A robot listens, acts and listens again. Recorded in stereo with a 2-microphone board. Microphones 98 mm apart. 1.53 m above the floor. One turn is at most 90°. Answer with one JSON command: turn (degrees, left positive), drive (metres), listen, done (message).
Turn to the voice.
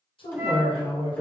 {"turn": 65}
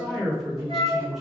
{"done": "Facing the man speaking."}